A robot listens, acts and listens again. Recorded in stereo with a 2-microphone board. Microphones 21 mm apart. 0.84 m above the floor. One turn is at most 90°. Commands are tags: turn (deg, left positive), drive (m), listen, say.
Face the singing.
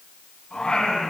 <turn deg="50"/>
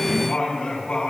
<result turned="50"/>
<turn deg="75"/>
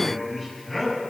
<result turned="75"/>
<turn deg="10"/>
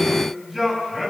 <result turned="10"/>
<say>Facing the singing, over 4 m away.</say>